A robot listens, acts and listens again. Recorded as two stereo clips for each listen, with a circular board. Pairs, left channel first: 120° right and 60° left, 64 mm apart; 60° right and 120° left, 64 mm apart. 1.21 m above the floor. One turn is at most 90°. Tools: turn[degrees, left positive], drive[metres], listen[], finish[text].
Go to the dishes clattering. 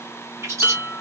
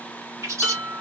Thought: The dishes clattering: 125° left.
Action: turn[90]
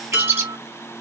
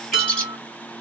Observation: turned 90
Thought: The dishes clattering is now 45° left.
Action: turn[45]
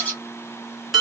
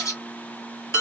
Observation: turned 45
Thought: The dishes clattering is now 25° right.
Action: turn[-25]
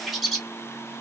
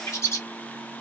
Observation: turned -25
Action: listen[]
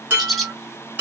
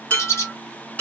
Action: drive[1.0]
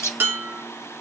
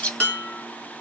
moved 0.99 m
Thought: The dishes clattering is now 10° left.
Action: turn[10]
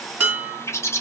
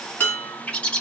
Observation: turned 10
Action: drive[1.0]
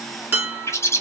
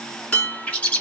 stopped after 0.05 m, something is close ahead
Thought: The dishes clattering is now 10° left.
Action: turn[10]
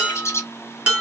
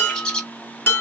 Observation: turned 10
Action: finish[I am next to the dishes clattering.]